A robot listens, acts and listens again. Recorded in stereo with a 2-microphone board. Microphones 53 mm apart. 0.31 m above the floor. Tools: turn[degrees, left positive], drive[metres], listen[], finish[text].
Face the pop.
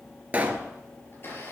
Thought: The pop: about 30° right or 150° right.
Action: turn[-30]
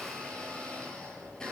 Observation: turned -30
Action: listen[]
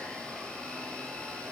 Action: finish[I heard a pop, but can't make it out now. It was about straight ahead or 120° right.]